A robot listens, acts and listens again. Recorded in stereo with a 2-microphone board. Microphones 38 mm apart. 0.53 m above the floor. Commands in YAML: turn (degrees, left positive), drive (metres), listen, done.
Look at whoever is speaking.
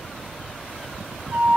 listen: true
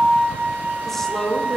turn: 30
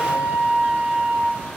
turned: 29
listen: true
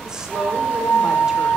listen: true
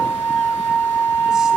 done: "I heard a woman speaking, but can't make it out now. It was about 20° right or 145° left."